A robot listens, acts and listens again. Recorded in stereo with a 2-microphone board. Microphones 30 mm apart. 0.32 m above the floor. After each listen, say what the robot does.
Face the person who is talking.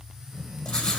Turn 70° left.
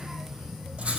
Turn 35° left.
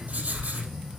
Turn 10° left.
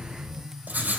Facing the child speaking.